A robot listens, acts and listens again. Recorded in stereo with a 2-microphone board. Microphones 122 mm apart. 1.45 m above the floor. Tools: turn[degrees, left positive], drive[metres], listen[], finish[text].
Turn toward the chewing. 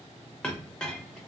Action: listen[]
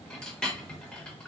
Action: listen[]
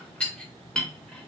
Action: finish[I can't make out chewing to turn to.]